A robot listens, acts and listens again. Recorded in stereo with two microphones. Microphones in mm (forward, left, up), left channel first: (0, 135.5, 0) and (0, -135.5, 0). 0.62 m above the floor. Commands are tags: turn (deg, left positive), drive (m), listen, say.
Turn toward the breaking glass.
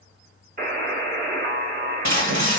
<turn deg="-75"/>
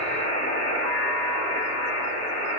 <listen/>
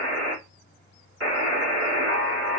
<say>I heard breaking glass, but can't make it out now. It was about straight ahead or 30° right.</say>